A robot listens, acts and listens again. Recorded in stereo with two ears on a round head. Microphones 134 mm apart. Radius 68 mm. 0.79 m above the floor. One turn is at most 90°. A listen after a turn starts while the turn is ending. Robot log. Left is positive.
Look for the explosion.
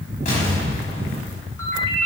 note: The explosion: about 50° left or 130° left.
cmd yaw +50
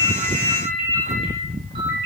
cmd idle
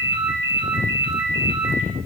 end: I heard an explosion, but can't make it out now. It was about straight ahead or 80° left.